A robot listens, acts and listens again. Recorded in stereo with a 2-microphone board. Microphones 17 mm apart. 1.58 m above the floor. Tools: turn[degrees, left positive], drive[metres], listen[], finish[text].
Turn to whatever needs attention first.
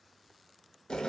Action: listen[]
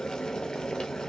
Action: listen[]
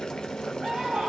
Action: turn[-90]
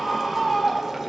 Action: finish[Facing the scream, 1 to 2 m away.]